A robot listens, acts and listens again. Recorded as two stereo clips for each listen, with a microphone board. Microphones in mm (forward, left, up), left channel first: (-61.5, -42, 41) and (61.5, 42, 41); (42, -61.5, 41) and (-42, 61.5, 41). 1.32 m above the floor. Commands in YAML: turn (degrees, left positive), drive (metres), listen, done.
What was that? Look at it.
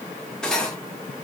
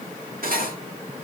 turn: 130
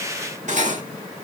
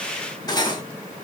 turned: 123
done: "Facing the cutlery clinking."